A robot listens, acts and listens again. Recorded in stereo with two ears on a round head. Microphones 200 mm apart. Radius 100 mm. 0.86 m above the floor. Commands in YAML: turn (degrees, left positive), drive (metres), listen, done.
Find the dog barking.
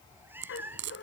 turn: 55
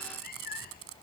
listen: true
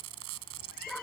done: "Facing the dog barking."